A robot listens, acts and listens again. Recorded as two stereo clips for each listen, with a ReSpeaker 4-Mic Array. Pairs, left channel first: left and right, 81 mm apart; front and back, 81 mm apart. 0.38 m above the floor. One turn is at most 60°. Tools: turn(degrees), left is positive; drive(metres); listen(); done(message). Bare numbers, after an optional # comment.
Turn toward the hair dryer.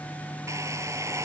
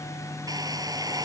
# The hair dryer: 140° right.
turn(-60)
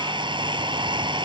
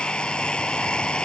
# The hair dryer is now 80° right.
turn(-60)
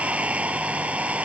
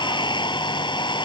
# The hair dryer is now 15° right.
turn(-15)
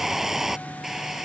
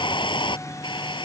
done("Facing the hair dryer.")